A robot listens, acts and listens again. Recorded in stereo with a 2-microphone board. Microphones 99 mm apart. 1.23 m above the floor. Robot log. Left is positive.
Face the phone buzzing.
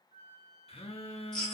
cmd yaw +90
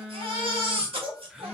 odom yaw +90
end: Facing the phone buzzing.